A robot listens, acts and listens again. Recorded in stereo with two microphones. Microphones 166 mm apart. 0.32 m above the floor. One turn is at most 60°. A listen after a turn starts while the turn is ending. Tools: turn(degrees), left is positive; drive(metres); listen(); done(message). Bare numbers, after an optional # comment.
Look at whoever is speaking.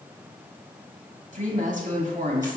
# The woman speaking: about 50° right or 130° right.
turn(-50)
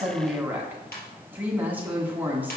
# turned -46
# So it is at 10° right.
turn(-10)
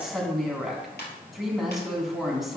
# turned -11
done("Facing the woman speaking.")